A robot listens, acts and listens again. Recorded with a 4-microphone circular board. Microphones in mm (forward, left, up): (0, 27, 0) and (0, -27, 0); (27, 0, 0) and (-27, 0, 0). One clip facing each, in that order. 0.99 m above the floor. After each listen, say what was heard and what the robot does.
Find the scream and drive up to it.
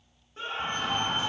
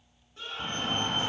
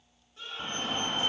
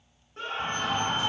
The scream: 140° left. Turn 140° left.
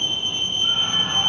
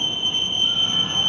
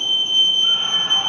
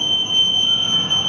Keep listening.
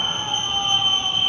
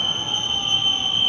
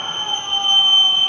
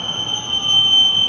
Keep listening.
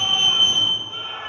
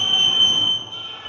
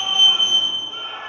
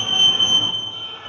The scream is now 40° left. Turn 40° left.
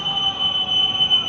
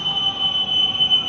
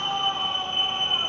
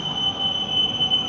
Keep listening.
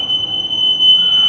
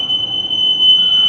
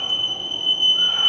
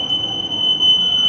Keep listening.
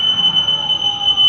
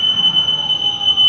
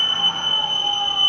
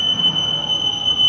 Facing where the scream came from. I can't hear it now. I did not reach it.